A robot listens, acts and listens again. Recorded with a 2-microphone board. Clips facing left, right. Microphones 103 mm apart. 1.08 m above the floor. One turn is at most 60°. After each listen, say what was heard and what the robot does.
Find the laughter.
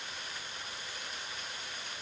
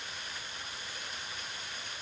Keep listening.
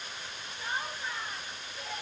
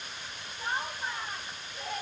The laughter: about 60° right or 120° right. Turn 60° right.
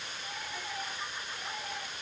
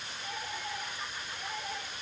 Found it: laughter, straight ahead.